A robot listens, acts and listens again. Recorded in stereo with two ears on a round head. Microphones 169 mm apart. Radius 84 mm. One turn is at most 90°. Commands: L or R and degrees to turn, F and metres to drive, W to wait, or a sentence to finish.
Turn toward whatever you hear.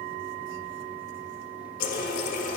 L45
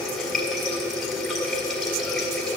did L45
Found it: a running tap, straight ahead, 1 to 2 m away.